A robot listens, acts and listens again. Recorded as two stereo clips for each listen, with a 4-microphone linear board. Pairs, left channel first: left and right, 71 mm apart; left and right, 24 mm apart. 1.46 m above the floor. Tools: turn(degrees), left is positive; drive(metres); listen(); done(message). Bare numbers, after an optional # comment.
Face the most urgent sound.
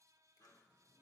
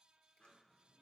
listen()
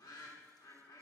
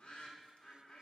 listen()
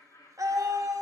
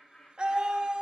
# The scream: about 50° right or 130° right.
turn(-50)
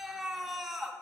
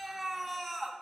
done("Facing the scream.")